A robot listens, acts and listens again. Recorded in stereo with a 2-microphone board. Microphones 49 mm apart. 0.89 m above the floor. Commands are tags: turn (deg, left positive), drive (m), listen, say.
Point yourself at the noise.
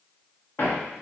<turn deg="45"/>
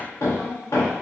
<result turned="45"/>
<turn deg="90"/>
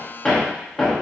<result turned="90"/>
<turn deg="10"/>
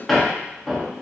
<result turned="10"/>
<say>Facing the hammering, under 1 m away.</say>